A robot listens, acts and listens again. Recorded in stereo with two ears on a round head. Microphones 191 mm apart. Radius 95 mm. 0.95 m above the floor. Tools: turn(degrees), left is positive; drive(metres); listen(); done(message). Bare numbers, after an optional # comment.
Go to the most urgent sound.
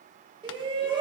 # The shout: about 25° right or 155° right.
turn(-25)
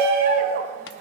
# So it is at 130° right.
turn(-130)
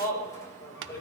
# The shout is now 15° left.
turn(15)
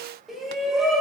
drive(1.0)
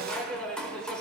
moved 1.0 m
drive(1.0)
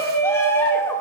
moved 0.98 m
# The shout is now 15° left.
turn(15)
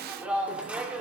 drive(1.0)
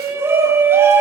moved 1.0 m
# The shout is now 10° right.
turn(-10)
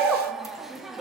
drive(1.0)
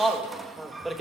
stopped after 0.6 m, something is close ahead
done("I am next to the shout.")